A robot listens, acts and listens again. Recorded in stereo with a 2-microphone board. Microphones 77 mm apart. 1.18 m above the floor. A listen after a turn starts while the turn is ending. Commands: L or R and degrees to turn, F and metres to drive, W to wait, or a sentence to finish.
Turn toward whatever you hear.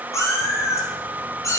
L40
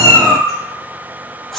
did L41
Facing the cat meowing.